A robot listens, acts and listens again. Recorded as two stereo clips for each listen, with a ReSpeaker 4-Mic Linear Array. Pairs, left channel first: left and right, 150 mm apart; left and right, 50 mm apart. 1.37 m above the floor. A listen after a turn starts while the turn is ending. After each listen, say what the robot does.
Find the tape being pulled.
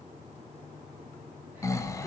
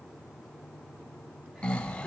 Keep listening.
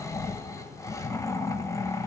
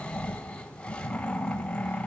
Keep listening.
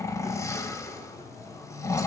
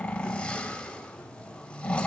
I can't make out tape being pulled to turn to.